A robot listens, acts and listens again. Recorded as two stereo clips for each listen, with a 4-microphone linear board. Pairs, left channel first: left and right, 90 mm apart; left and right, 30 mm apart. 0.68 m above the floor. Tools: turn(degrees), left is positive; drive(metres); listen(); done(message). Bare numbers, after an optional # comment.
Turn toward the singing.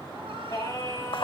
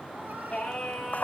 # The singing: about 30° left or 150° left.
turn(30)
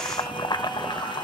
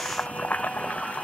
listen()
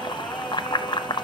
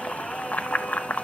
listen()
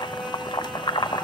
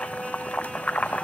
done("I heard singing, but can't make it out now. It was about straight ahead or 120° left.")